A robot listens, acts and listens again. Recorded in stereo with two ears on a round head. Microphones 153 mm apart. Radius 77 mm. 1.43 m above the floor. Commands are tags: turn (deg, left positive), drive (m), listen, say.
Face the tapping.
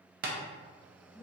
<turn deg="-60"/>
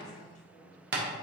<turn deg="-60"/>
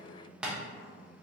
<say>Facing the tapping, under 1 m away.</say>